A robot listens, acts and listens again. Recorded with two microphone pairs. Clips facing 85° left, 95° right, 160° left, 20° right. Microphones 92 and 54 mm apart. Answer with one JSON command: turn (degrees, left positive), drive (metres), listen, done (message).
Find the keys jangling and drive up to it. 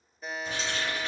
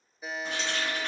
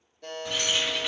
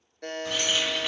{"turn": -110}
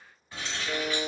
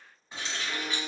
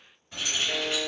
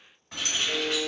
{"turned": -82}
{"turn": -30}
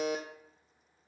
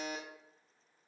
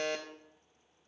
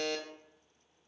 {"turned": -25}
{"listen": true}
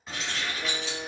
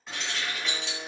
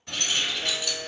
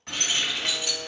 {"drive": 1.0}
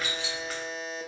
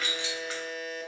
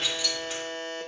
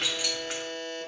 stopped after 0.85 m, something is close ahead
{"done": "Arrived at the keys jangling, straight ahead."}